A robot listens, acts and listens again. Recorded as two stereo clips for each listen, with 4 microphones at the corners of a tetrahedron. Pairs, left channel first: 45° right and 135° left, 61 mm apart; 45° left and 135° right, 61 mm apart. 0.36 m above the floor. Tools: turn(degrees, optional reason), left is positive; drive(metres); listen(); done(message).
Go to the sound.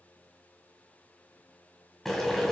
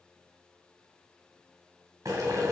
turn(degrees=-135, reason="The boiling: 135° right.")
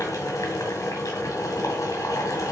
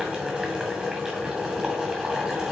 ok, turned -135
turn(degrees=-60, reason="The boiling is now 60° right.")
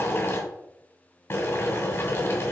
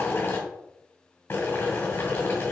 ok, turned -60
drive(metres=1.0)
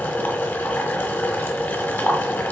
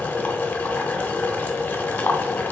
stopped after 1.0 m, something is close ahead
done("I am next to the boiling.")